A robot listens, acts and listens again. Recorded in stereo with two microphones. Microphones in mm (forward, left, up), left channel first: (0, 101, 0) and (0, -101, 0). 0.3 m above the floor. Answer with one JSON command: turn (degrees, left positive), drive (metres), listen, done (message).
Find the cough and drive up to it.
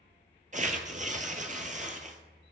{"listen": true}
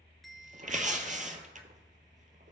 {"listen": true}
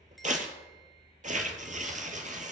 {"done": "I can't make out a cough to turn to."}